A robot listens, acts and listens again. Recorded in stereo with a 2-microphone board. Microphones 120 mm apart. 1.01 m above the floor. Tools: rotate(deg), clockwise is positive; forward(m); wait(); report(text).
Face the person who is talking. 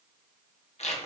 wait()
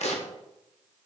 wait()
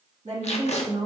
rotate(90)
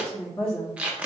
rotate(-10)
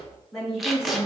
report("Found it: a woman speaking, straight ahead, 1 to 2 m away.")